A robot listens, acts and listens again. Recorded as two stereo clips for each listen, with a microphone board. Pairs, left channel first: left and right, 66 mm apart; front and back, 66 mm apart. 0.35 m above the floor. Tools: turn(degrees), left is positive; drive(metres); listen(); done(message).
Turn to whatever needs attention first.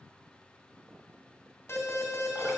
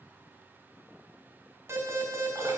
turn(degrees=135)
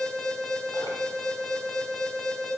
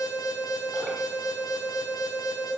done("Facing the alarm, 2 to 4 m away.")